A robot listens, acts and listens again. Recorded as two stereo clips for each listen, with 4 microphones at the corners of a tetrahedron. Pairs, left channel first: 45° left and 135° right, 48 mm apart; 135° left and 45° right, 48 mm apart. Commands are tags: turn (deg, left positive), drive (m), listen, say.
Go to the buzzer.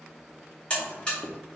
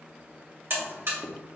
<turn deg="-15"/>
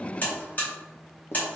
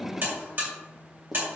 <drive m="1.0"/>
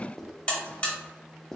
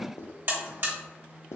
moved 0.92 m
<turn deg="-10"/>
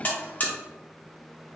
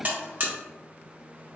<drive m="1.0"/>
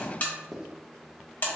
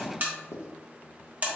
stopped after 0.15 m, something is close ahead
<say>I am next to the buzzer.</say>